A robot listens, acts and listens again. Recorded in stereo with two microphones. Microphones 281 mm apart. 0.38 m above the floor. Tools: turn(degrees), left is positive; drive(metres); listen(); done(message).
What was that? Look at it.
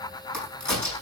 turn(degrees=90)
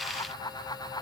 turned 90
done("I heard a crack from this way, but can't make it out now.")